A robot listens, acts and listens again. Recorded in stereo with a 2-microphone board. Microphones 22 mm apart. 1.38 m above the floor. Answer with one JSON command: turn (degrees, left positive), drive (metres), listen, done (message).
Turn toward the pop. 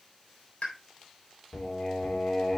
{"turn": 70}
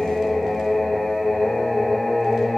{"listen": true}
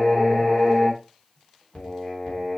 {"done": "I heard a pop, but can't make it out now. It was about straight ahead or 40° left."}